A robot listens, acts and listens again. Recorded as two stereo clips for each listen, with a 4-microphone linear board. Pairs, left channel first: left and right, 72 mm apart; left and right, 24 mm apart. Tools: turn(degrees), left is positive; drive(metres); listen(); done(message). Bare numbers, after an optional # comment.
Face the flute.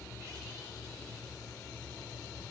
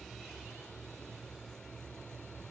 listen()
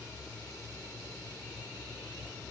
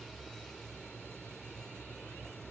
listen()
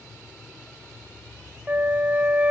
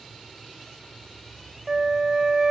# The flute: about 20° right or 160° right.
turn(-20)
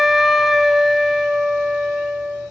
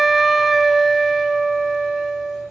done("Found it: a flute, straight ahead, under 1 m away.")